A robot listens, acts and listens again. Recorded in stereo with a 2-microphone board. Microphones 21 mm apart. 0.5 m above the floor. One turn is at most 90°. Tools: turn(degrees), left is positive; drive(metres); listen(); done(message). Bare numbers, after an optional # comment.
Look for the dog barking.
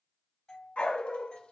turn(90)
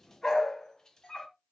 # So it is at 40° left.
turn(40)
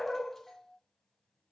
# The dog barking is now 20° left.
turn(20)
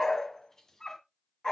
# The dog barking is now 25° left.
turn(25)
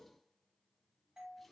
listen()
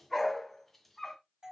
done("Facing the dog barking, 1 to 2 m away.")